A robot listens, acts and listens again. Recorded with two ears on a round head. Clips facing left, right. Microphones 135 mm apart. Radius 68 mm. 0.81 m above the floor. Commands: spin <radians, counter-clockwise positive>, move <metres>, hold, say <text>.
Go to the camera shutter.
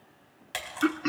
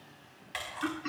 spin 0.96
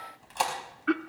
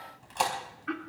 move 1.0
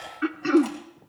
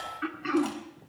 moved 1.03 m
hold
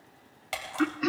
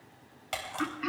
move 1.0
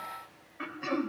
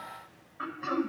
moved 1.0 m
hold
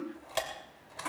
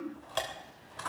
spin 0.17
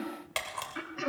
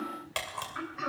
move 1.0
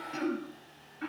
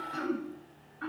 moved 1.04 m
hold
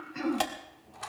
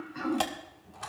move 1.0
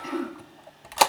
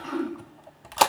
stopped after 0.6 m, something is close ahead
say Arrived at the camera shutter, straight ahead.